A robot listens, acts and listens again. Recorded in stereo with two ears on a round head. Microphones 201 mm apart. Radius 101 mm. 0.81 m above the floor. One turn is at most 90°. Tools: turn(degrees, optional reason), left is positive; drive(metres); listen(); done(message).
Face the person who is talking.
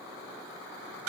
listen()
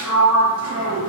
listen()
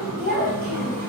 turn(degrees=-45, reason="The child speaking: about 45° right or 135° right.")
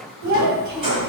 turn(degrees=-90, reason="So it is at 90° right.")
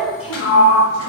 done("Facing the child speaking.")